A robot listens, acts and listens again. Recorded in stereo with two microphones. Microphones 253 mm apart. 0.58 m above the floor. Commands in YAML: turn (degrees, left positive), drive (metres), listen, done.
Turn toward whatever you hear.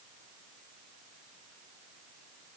listen: true
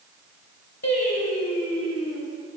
turn: 70
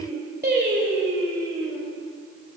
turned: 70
turn: -55
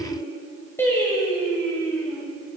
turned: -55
turn: 10
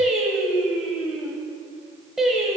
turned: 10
done: "Facing the singing."